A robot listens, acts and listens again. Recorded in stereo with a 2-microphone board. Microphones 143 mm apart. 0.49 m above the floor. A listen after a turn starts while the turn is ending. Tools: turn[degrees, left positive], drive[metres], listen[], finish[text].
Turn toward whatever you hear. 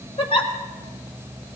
Thought: The giggle: about 40° left or 140° left.
Action: turn[40]
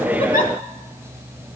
Action: listen[]
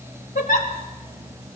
Thought: So it is at 100° left.
Action: turn[100]
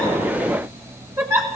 Thought: The giggle is now 20° right.
Action: turn[-20]
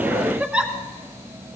Action: finish[Facing the giggle, 1 to 2 m away.]